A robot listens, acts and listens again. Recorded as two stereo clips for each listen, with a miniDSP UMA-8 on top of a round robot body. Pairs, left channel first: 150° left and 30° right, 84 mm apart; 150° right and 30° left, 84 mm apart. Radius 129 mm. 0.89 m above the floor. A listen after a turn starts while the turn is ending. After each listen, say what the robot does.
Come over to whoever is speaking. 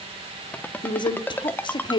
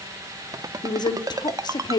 Turn 175° left.
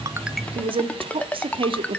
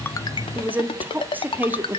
Turn 40° right.
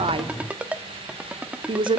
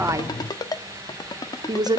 Turn 10° right.
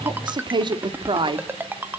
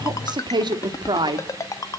Drive 1.0 m forward.
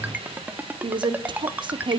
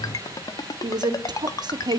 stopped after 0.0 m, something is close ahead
Something is in my way. I am facing the woman speaking but have not reached it.